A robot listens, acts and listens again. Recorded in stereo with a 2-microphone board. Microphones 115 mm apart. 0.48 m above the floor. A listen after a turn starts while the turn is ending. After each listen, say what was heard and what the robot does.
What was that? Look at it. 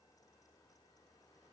Keep listening.
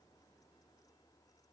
Keep listening.
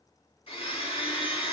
The blender: about 55° left or 125° left. Turn 55° left.
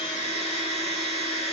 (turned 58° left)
So it is at 70° left. Turn 70° left.
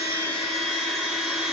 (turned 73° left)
Found it: a blender, straight ahead, 1 to 2 m away.